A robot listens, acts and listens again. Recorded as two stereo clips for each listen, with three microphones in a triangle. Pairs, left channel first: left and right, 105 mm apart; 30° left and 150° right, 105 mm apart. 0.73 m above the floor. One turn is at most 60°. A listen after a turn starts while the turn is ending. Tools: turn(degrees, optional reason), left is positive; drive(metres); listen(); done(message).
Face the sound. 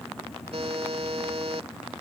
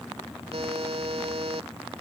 turn(degrees=-60, reason="The buzzer: 120° right.")
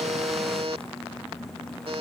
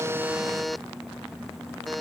turn(degrees=-60, reason="The buzzer is now 60° right.")
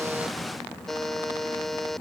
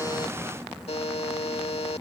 done("Found it: a buzzer, straight ahead.")